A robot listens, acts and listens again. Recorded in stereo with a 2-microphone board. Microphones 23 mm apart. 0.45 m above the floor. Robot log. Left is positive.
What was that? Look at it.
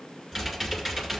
note: The typing on a keyboard: about 15° right or 165° right.
cmd yaw -15
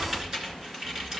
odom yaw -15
note: So it is at 145° right.
cmd yaw -145
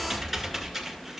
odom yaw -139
end: Found it: typing on a keyboard, straight ahead.